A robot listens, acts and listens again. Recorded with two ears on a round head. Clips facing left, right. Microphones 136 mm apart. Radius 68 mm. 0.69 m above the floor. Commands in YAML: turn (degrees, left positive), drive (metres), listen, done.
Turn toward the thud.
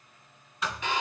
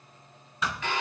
turn: -70
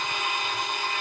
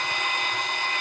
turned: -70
listen: true
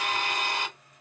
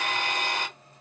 done: "I heard a thud, but can't make it out now. It was about straight ahead or 40° right."